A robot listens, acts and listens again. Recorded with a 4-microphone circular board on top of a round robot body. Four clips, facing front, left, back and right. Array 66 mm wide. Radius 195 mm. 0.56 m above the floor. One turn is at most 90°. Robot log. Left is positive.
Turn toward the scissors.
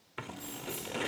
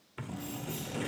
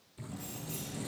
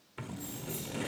end: Facing the scissors.